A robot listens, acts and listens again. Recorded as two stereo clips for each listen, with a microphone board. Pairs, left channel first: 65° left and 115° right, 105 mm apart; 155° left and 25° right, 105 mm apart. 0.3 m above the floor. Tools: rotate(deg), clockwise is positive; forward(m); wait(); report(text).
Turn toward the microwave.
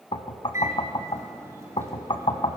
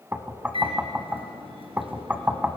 rotate(50)
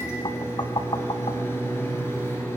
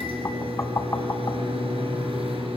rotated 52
report("Found it: a microwave, straight ahead.")